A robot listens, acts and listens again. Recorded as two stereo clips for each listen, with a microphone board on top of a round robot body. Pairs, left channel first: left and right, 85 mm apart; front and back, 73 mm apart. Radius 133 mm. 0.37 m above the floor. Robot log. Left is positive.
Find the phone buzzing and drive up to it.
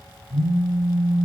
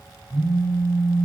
note: The phone buzzing: 75° right.
cmd yaw -75
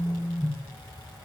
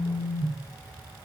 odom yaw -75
note: The phone buzzing is now 25° left.
cmd yaw +25
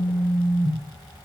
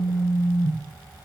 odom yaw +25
cmd fwd 1.0
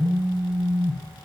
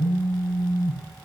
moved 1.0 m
cmd fwd 1.0
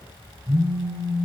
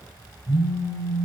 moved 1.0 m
note: The phone buzzing is now 20° right.
cmd yaw -20
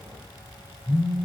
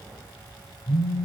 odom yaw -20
cmd fwd 1.0
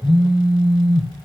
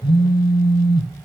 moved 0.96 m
cmd fwd 1.0
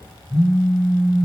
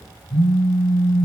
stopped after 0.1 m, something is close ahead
end: I am next to the phone buzzing.